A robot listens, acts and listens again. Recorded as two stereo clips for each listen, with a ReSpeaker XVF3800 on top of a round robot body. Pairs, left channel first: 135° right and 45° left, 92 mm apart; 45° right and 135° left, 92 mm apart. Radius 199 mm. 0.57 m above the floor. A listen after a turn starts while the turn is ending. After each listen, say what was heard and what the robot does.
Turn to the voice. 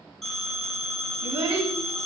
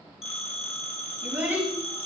The child speaking: 70° left. Turn 70° left.
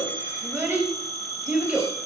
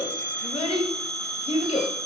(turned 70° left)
The child speaking is now 30° right. Turn 30° right.
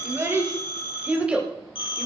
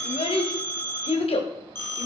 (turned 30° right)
The child speaking is now 35° right. Turn 35° right.
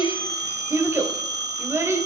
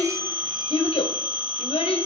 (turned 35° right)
The child speaking is now 20° right. Turn 20° right.
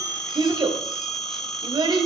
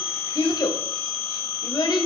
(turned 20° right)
Found it: a child speaking, straight ahead, 2 to 4 m away.